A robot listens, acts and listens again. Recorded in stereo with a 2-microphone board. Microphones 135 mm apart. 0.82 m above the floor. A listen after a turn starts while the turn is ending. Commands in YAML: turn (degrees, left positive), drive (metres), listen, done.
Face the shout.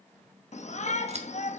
turn: 55
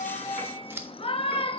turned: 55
turn: 50
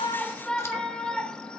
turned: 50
turn: 10
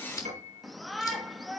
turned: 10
done: "Facing the shout."